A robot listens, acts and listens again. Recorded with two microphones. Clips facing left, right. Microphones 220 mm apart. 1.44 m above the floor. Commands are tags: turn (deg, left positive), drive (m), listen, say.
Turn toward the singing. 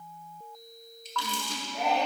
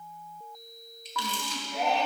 <turn deg="-70"/>
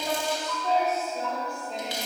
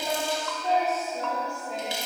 <say>Facing the singing, 1 to 2 m away.</say>